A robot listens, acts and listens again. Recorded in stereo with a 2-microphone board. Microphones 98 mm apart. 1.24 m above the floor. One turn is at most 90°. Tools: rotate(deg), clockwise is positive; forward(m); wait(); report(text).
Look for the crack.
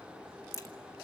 rotate(-35)
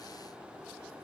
wait()
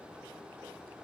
report("I heard a crack, but can't make it out now. It was about straight ahead or 110° left.")